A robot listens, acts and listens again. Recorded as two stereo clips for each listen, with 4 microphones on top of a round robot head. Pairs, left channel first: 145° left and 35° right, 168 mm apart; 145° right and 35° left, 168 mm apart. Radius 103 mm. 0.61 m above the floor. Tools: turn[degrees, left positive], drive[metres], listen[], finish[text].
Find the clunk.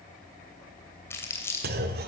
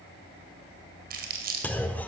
Thought: The clunk: 65° right.
Action: turn[-65]
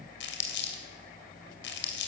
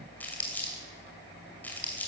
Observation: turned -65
Action: finish[Facing where the clunk came from. I can't hear it now.]